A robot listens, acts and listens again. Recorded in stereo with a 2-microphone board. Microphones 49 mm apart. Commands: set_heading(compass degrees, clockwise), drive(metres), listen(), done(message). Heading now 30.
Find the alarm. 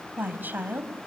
listen()
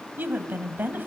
listen()
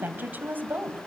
done("I can't make out an alarm to turn to.")